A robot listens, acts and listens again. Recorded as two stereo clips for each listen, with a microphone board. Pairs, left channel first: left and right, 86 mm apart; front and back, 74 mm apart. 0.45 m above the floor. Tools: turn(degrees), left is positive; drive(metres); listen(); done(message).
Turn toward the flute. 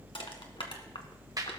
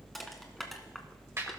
listen()
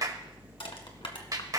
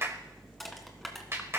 listen()
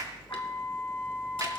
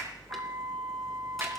turn(degrees=150)
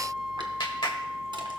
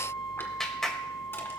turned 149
done("Facing the flute.")